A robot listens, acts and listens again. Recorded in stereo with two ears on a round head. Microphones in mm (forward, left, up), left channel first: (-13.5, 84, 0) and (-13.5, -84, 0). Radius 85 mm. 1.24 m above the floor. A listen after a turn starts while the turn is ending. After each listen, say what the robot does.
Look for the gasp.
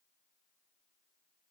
Keep listening.
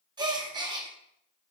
Turn 25° right.
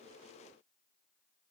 Keep listening.
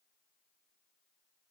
I heard a gasp, but can't make it out now. It was about straight ahead or 130° right.